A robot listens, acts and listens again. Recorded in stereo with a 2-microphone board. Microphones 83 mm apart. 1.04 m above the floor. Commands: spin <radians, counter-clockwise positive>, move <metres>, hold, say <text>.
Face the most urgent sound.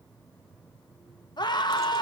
spin 1.05
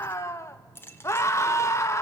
spin 0.70
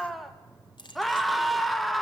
say Facing the scream, 1 to 2 m away.